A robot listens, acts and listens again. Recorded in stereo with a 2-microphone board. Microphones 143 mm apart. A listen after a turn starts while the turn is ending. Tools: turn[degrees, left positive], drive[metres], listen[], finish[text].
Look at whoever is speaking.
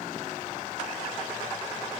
Action: listen[]
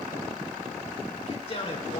Thought: The man speaking: about 50° left or 130° left.
Action: turn[50]
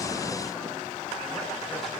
Action: listen[]
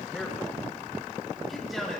Action: finish[Found it: a man speaking, straight ahead.]